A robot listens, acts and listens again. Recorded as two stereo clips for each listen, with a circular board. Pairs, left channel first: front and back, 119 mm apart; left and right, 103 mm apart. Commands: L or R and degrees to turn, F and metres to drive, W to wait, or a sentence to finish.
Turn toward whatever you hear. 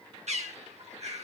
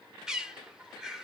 R170
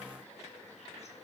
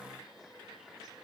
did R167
W
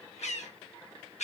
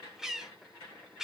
Found it: a bird, straight ahead.